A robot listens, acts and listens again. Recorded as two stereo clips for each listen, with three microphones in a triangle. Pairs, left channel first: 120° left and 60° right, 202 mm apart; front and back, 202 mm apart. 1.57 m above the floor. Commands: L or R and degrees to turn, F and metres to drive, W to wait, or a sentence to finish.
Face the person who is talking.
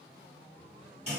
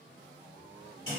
W
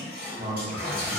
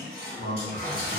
Facing the man speaking.